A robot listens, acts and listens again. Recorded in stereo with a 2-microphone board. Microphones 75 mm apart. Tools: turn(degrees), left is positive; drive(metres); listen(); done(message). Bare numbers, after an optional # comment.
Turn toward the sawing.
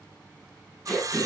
# The sawing: about 50° right or 130° right.
turn(-50)
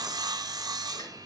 # So it is at 75° right.
turn(-75)
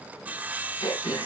# The sawing is now 25° right.
turn(-25)
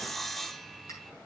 done("Found it: sawing, straight ahead, under 1 m away.")